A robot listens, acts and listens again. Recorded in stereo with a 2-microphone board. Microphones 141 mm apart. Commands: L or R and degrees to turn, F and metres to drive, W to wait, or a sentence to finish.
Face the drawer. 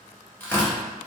W
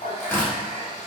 W
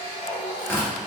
I can't make out a drawer, only tearing paper and a running tap.